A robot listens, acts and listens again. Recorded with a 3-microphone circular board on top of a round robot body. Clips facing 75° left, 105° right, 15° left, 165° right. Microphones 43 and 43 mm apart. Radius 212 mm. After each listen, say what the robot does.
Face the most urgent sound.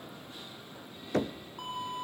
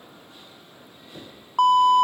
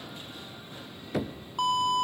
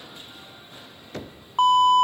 Turn 115° right.
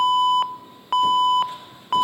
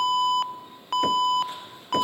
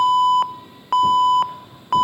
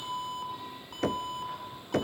Facing the alarm.